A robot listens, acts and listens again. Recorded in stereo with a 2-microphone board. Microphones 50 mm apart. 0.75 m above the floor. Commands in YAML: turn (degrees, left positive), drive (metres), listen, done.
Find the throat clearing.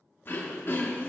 turn: 45
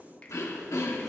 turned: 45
turn: 90
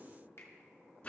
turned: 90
turn: 30
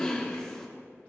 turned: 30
turn: 15
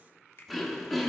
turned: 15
done: "Facing the throat clearing, 1 to 2 m away."